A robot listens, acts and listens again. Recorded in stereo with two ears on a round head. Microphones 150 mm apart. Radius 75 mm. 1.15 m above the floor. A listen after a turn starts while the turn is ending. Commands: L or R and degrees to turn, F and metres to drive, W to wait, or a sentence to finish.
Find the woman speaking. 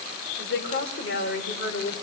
L65
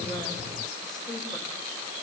W
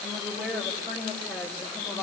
Found it: a woman speaking, straight ahead.